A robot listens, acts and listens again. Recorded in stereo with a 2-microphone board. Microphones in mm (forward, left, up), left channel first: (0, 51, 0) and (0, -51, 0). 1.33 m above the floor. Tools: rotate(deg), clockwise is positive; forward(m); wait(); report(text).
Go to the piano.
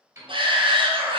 rotate(30)
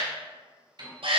rotate(115)
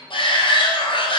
rotate(-25)
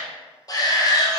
wait()
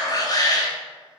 wait()
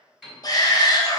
forward(1.0)
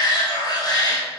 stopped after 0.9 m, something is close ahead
wait()
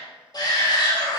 wait()
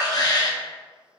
report("Facing where the piano came from. I can't hear it now. I did not reach it.")